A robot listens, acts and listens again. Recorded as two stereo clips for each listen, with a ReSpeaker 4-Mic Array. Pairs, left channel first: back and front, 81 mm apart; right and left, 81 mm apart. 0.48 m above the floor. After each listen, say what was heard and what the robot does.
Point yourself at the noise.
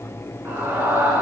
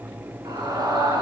The scream: 60° left. Turn 60° left.
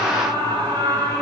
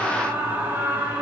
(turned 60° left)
The scream is now 25° left. Turn 25° left.
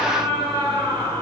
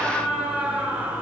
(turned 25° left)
The scream is now 15° left. Turn 15° left.
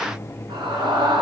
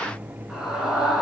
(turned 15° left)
Facing the scream.